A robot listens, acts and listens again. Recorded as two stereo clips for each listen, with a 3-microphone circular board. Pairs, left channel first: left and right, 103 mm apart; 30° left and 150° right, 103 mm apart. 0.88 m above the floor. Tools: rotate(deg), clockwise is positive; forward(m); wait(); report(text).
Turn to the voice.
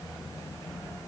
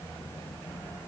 wait()
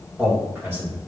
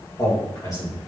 rotate(25)
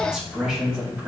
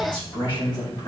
rotate(10)
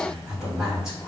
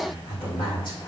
report("Found it: a man speaking, straight ahead, 2 to 4 m away.")